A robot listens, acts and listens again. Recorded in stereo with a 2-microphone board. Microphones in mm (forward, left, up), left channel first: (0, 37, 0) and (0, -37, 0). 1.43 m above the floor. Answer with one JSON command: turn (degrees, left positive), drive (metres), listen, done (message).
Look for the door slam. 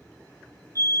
{"listen": true}
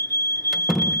{"turn": -30}
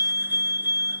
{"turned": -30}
{"listen": true}
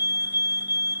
{"done": "I heard a door slam, but can't make it out now. It was about 25° left or 145° right."}